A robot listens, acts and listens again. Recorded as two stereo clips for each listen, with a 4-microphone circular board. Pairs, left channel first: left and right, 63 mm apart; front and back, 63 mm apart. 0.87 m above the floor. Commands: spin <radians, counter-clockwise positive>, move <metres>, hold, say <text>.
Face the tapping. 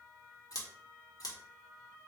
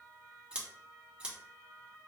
hold
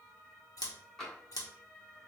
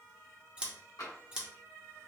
spin 0.17
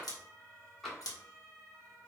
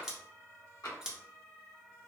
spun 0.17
say Found it: tapping, straight ahead.